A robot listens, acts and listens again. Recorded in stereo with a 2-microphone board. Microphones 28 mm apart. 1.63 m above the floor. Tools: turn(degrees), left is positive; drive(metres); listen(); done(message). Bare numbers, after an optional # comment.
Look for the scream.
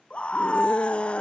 # The scream: about 40° left or 140° left.
turn(40)
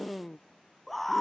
done("Facing the scream.")